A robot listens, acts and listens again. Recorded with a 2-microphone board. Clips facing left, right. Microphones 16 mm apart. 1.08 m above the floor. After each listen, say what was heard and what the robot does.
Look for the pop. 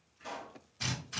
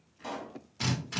The pop: about 60° right or 120° right. Turn 60° right.
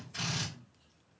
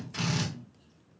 Keep listening.
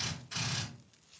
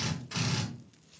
I heard a pop, but can't make it out now. It was about straight ahead or 60° right.